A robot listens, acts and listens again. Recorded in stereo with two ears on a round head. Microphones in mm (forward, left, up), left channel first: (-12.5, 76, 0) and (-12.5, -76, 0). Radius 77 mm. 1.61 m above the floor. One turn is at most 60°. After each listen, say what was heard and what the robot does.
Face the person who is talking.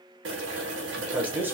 Turn 30° right.
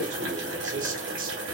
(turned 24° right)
So it is at 130° right. Turn 60° right.
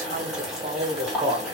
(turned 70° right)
The man speaking is now 20° right. Turn 20° right.
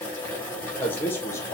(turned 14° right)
The man speaking is now 15° left. Turn 15° left.
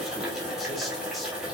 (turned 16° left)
Keep listening.
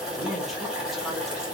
Keep listening.
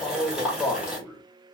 Facing the man speaking.